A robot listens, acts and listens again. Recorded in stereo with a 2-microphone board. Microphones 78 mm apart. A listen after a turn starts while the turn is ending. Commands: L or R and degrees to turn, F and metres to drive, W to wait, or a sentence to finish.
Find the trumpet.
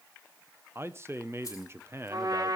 R55
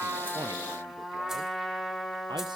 Found it: a trumpet, straight ahead, 2 to 4 m away.